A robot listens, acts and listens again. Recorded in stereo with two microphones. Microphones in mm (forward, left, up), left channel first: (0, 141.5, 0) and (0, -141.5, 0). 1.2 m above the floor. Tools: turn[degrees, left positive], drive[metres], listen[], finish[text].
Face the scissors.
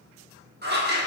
Thought: The scissors: about 35° right or 145° right.
Action: turn[-35]
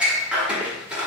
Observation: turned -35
Action: finish[Found it: scissors, straight ahead, 1 to 2 m away.]